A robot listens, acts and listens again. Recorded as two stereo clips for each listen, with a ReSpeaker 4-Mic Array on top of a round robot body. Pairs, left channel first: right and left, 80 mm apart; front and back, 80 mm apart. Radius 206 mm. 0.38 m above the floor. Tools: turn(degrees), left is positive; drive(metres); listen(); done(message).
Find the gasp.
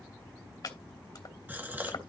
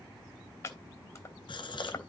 turn(degrees=20)
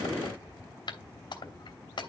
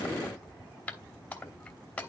done("I heard a gasp from this way, but can't make it out now.")